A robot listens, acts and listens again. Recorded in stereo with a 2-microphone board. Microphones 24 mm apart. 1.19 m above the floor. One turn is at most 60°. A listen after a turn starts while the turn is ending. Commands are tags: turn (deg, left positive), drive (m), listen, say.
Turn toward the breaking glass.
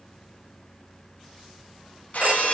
<turn deg="60"/>
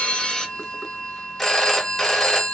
<listen/>
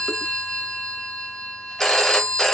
<say>I heard breaking glass, but can't make it out now. It was about 10° left or 50° left.</say>